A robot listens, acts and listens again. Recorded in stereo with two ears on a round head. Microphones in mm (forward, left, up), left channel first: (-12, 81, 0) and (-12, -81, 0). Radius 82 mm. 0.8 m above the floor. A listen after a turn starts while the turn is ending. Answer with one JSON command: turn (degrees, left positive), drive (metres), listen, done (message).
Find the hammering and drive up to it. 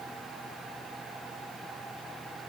{"listen": true}
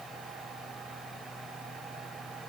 {"listen": true}
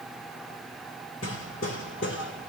{"turn": 70}
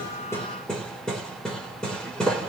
{"drive": 1.0}
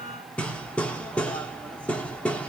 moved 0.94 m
{"drive": 1.0}
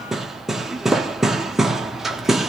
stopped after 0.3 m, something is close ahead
{"done": "Arrived at the hammering, straight ahead."}